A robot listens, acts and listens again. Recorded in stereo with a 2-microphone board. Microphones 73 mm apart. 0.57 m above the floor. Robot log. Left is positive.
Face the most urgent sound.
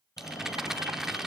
note: The fire alarm: about 55° left or 125° left.
cmd yaw +55
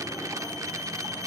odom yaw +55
note: So it is at 65° left.
cmd yaw +65
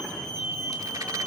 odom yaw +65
note: The fire alarm is now 15° left.
cmd yaw +15
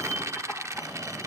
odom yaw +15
end: Found it: a fire alarm, straight ahead, over 4 m away.